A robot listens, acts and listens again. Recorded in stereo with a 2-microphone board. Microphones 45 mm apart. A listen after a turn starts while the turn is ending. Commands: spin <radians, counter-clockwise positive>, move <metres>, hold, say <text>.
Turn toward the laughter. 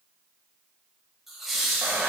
spin 0.52
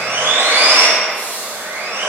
spin 2.36
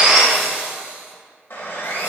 hold
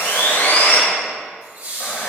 spin -0.61
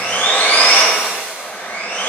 hold
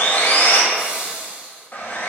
spin -0.44
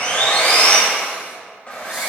hold
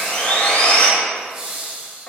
spin -0.17
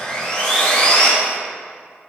hold
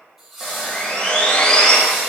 say Found it: laughter, straight ahead, 2 to 4 m away.